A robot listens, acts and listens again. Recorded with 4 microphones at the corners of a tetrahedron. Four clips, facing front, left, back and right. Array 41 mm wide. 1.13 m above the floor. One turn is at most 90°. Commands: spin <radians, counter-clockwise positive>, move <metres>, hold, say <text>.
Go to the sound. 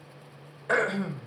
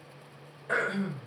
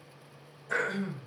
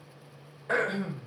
move 1.0
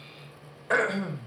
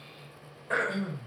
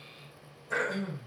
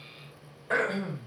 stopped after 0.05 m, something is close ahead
say Something is in my way. I am facing the throat clearing but have not reached it.